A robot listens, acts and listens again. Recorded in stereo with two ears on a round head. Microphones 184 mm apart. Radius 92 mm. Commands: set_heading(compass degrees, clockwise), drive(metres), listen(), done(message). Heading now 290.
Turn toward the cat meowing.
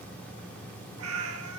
set_heading(20)
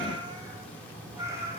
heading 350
set_heading(5)
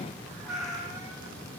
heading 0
done("Facing the cat meowing, 2 to 4 m away.")